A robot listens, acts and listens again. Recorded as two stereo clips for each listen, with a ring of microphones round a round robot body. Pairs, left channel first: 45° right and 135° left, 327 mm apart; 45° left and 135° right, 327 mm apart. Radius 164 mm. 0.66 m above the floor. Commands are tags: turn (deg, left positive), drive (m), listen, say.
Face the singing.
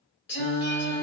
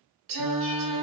<turn deg="-105"/>
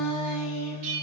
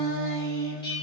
<turn deg="-30"/>
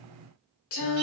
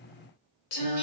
<say>Found it: singing, straight ahead.</say>